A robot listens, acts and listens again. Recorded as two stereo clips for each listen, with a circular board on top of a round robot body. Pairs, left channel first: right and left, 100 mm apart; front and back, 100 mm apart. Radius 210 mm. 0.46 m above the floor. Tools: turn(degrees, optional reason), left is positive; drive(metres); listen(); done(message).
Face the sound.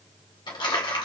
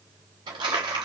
turn(degrees=-135, reason="The crumpling: 135° right.")
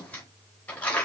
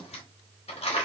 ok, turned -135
turn(degrees=-15, reason="The crumpling is now 15° right.")
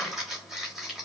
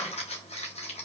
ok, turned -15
done("Found it: crumpling, straight ahead.")